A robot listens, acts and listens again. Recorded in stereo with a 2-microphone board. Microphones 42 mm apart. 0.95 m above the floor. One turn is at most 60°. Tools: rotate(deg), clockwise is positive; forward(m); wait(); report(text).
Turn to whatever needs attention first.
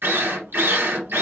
wait()
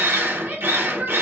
rotate(45)
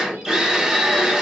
wait()
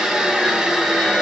wait()
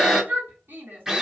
rotate(60)
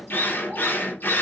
rotate(20)
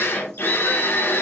wait()
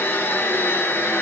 report("I heard a shout from this way, but can't make it out now.")